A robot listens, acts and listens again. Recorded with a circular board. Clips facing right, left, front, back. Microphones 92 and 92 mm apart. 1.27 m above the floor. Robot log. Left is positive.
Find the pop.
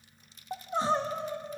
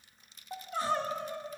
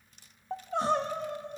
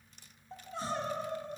cmd idle
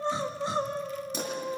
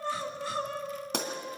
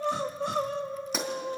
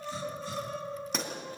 note: The pop: 85° left.
cmd yaw +85
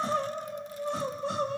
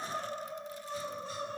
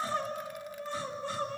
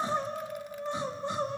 end: I heard a pop from this way, but can't make it out now.